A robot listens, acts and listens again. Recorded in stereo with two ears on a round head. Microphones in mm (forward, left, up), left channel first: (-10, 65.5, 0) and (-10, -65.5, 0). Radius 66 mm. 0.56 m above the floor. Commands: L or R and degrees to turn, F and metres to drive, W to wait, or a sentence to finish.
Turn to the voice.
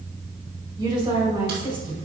R35
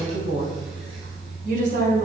R115
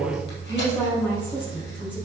L10
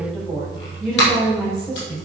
Facing the woman speaking.